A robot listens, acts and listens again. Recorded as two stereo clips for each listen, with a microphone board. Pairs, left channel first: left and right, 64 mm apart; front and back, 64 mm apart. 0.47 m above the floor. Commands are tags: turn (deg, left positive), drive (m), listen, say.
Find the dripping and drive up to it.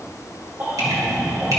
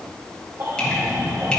<turn deg="-75"/>
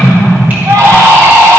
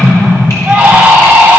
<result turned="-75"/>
<turn deg="-30"/>
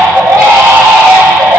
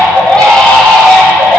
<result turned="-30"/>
<listen/>
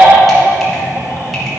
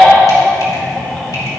<listen/>
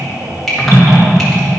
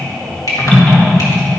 <drive m="1.0"/>
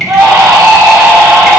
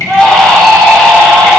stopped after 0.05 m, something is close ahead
<say>Blocked. The dripping is further on, straight ahead.</say>